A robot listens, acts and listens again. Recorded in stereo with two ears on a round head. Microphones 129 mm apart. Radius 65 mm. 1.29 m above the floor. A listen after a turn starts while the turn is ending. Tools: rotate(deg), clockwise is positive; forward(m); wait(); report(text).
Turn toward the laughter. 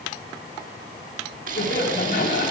rotate(-65)
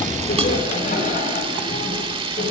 rotate(-50)
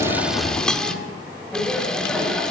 rotate(-10)
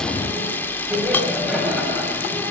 report("Found it: laughter, straight ahead, over 4 m away.")